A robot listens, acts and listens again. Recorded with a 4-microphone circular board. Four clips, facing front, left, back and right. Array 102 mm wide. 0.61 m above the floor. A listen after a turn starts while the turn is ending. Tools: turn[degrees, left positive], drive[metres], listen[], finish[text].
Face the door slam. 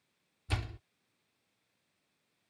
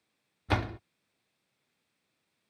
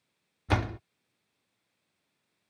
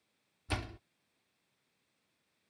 Thought: The door slam: 140° left.
Action: turn[140]
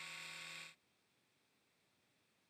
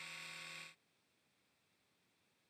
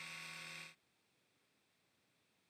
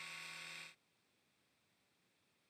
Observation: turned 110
Thought: Nothing new. It was at 30° left.
Action: turn[30]
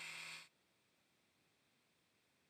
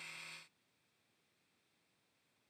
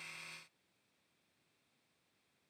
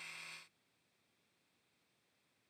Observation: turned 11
Thought: Nothing new. It was at 20° left.
Action: turn[20]
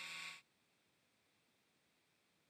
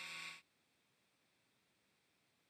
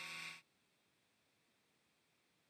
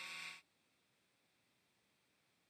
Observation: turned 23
Action: finish[I heard a door slam from this way, but can't make it out now.]